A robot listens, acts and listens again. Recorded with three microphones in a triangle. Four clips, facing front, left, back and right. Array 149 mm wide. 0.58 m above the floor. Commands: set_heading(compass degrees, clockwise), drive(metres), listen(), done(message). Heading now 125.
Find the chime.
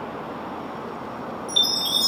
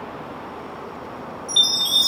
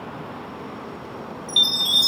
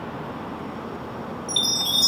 set_heading(285)
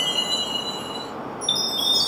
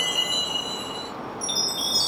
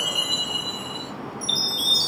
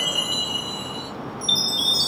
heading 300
set_heading(285)
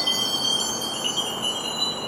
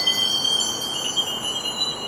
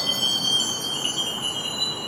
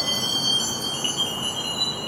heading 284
done("Facing the chime.")